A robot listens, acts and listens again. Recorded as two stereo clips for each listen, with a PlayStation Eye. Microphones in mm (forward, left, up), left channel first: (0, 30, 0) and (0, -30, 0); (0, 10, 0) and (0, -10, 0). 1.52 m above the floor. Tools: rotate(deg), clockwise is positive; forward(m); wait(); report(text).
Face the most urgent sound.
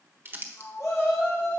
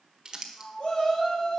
rotate(-60)
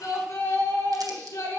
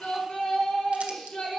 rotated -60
rotate(-60)
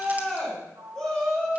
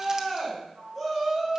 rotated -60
report("Found it: a shout, straight ahead.")